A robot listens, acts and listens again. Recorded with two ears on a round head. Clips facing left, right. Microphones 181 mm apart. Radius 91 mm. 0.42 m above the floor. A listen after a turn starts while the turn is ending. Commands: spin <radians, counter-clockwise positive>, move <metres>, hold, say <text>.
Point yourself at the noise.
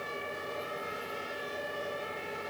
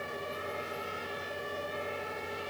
hold
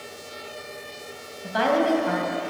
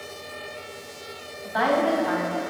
spin 0.70
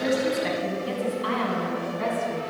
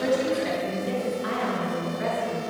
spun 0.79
spin 2.01
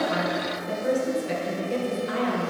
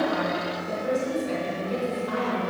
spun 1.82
say Facing the woman speaking.